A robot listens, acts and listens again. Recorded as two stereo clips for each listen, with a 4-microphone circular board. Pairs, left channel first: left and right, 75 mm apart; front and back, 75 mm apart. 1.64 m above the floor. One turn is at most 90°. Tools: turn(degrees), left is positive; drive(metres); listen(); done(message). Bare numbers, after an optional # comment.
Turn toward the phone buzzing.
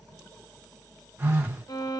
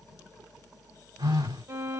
# The phone buzzing: 155° right.
turn(-90)
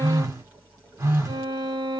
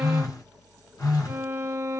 # The phone buzzing is now 40° right.
turn(-40)
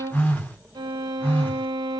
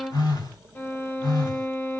# The phone buzzing is now 20° left.
turn(20)
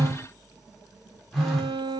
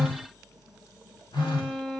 done("Facing the phone buzzing, 1 to 2 m away.")